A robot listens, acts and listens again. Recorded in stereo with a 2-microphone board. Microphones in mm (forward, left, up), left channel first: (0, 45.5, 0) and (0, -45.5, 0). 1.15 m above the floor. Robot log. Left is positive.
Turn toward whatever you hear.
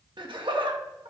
note: The laughter: about 70° right or 110° right.
cmd yaw -70
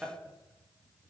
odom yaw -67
note: So it is at 15° right.
cmd yaw -15
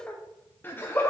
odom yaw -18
note: The laughter is now 30° left.
cmd yaw +30
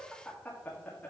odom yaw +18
note: The laughter is now 20° left.
cmd yaw +20
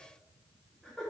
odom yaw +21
end: Found it: laughter, straight ahead.